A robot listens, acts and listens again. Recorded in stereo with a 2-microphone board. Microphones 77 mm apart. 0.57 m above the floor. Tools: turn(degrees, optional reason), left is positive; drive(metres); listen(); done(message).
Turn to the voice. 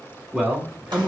turn(degrees=-30)
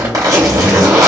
listen()
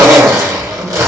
listen()
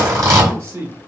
turn(degrees=-135, reason="So it is at 135° right.")
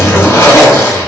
listen()
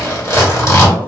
listen()
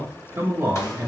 turn(degrees=-40, reason="The man speaking is now 40° right.")
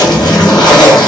listen()
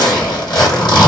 listen()
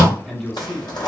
done("Facing the man speaking, 1 to 2 m away.")